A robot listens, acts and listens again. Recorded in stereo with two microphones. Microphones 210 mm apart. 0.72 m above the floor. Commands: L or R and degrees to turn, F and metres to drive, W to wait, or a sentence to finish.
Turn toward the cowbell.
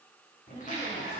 W
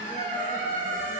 W
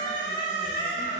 I can't make out a cowbell, only a squeak.